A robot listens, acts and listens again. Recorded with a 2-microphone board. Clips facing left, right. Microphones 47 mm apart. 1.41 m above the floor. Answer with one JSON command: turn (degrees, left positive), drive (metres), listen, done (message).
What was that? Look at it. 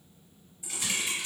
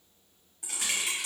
{"turn": -65}
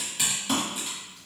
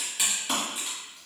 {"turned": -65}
{"done": "Found it: typing on a keyboard, straight ahead, 1 to 2 m away."}